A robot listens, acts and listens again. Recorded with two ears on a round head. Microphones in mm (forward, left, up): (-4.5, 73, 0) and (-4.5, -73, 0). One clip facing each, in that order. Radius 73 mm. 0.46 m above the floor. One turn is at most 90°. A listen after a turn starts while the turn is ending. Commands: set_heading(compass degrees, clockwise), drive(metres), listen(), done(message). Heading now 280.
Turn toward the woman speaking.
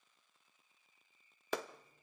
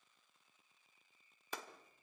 listen()
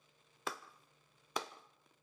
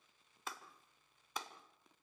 listen()
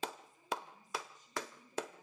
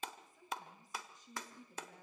set_heading(345)
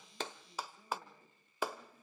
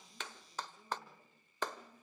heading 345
done("Facing the woman speaking, over 4 m away.")